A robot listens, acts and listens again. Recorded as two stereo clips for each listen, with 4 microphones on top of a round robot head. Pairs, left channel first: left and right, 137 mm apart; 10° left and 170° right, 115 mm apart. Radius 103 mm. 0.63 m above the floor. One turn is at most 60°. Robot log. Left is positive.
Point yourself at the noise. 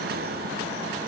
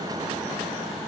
cmd idle
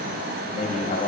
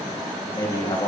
note: The man speaking: 65° left.
cmd yaw +60
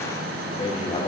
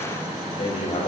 note: The man speaking is now 45° left.
cmd yaw +45
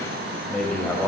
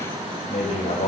note: The man speaking is now 10° left.
cmd yaw +10
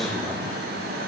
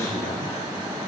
end: Found it: a man speaking, straight ahead.